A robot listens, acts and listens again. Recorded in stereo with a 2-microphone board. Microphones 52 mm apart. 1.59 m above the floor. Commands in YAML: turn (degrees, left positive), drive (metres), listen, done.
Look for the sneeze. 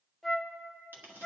listen: true
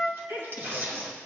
turn: -90
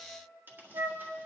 done: "I heard a sneeze from this way, but can't make it out now."